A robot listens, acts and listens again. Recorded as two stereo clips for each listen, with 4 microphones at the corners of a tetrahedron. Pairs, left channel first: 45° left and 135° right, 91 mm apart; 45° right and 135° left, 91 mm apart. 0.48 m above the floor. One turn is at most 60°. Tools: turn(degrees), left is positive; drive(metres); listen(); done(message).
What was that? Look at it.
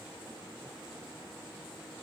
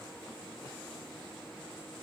listen()
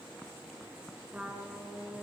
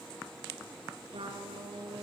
turn(degrees=60)
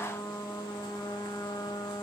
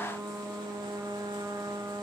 turn(degrees=60)
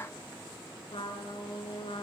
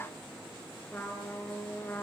turn(degrees=25)
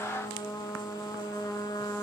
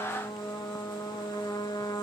done("Facing the trumpet, over 4 m away.")